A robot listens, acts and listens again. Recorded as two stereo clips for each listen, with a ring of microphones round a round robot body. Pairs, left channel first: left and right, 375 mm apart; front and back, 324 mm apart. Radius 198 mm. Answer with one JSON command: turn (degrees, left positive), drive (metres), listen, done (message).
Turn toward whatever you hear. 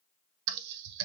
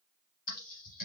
{"turn": -70}
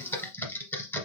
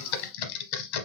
{"done": "Found it: typing on a keyboard, straight ahead."}